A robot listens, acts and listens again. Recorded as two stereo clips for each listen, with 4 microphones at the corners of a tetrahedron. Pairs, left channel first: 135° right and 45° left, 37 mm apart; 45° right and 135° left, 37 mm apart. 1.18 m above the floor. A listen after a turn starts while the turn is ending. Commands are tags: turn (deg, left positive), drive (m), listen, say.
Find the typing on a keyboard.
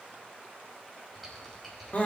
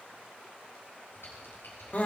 <turn deg="-50"/>
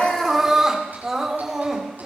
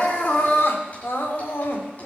<listen/>
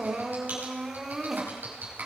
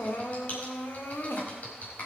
<say>Facing the typing on a keyboard, over 4 m away.</say>